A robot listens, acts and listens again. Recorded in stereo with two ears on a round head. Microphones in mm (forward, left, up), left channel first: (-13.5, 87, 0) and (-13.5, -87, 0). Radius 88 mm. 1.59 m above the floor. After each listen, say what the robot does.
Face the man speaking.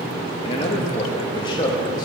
Turn 20° left.
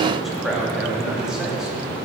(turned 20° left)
Facing the man speaking, 2 to 4 m away.